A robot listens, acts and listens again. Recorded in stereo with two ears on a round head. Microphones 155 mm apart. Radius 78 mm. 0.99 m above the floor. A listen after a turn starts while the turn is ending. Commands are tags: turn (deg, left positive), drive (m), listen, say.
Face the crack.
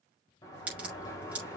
<turn deg="-30"/>
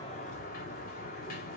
<listen/>
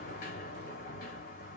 <say>I heard a crack, but can't make it out now. It was about 20° left or 140° right.</say>